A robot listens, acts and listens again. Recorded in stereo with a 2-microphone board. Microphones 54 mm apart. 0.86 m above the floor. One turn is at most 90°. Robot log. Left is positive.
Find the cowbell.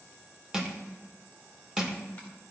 cmd idle
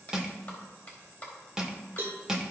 note: The cowbell: about 50° right or 130° right.
cmd yaw -50
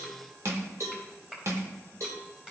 note: So it is at 80° right.
cmd yaw -80
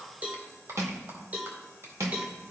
note: The cowbell is now 30° right.
cmd yaw -30
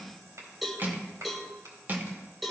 end: Facing the cowbell.